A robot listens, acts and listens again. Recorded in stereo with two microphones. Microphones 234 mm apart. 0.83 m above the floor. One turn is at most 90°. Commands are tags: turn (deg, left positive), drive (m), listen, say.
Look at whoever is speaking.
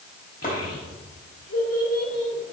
<turn deg="90"/>
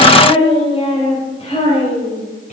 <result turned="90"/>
<turn deg="30"/>
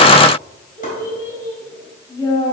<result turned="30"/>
<turn deg="15"/>
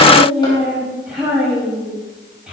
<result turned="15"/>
<say>Found it: a child speaking, straight ahead, over 4 m away.</say>